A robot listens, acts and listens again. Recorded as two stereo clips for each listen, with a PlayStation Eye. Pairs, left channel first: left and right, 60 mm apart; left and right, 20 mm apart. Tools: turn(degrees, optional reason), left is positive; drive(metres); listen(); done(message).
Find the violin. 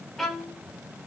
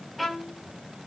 turn(degrees=30)
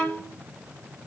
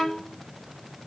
turn(degrees=145, reason="So it is at 145° left.")
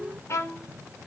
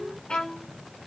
turn(degrees=70, reason="The violin is now 70° left.")
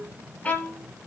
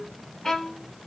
turn(degrees=25, reason="The violin is now 25° left.")
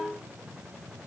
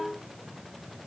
listen()
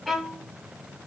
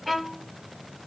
done("Facing the violin, under 1 m away.")